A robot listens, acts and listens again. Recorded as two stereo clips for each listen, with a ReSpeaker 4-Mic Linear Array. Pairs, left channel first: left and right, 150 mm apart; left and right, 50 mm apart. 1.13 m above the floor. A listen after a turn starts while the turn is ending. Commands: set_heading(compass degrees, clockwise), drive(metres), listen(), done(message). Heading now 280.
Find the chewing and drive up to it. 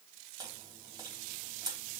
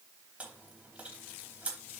set_heading(305)
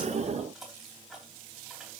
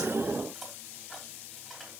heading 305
drive(1.0)
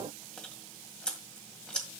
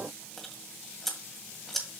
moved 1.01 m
drive(1.0)
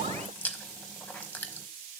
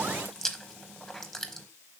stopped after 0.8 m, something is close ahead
set_heading(295)
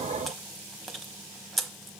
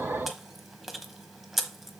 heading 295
done("I am next to the chewing.")